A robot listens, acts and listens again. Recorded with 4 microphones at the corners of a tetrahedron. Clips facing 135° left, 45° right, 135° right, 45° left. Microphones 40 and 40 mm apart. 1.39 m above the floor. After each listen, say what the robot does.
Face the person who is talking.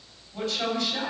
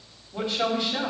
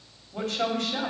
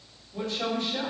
Turn 110° right.
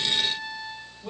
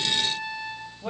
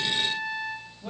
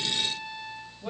Turn 30° right.
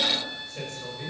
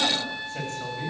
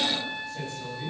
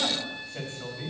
Found it: a man speaking, straight ahead.